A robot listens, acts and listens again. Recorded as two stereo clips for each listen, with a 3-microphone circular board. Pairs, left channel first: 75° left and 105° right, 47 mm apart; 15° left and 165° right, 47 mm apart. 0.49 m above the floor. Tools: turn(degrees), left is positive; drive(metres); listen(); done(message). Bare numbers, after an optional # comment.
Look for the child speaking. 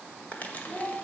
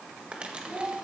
# The child speaking: 170° left.
turn(170)
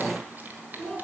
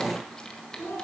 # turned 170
# The child speaking is now 15° right.
turn(-15)
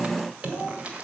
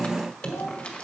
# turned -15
done("Facing the child speaking, 2 to 4 m away.")